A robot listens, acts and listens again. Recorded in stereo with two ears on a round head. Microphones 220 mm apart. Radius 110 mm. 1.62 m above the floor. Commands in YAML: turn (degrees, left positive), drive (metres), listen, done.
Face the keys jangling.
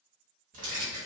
turn: -30
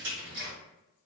turn: -135
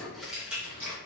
turn: -10
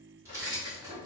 turn: -20
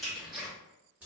turn: -10
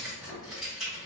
done: "Facing the keys jangling."